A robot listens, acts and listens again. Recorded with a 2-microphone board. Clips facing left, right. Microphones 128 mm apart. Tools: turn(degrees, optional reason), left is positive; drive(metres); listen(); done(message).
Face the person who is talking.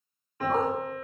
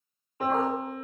listen()
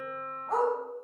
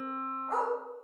listen()
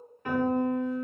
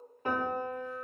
done("I can't make out anyone speaking, only a piano and a dog barking.")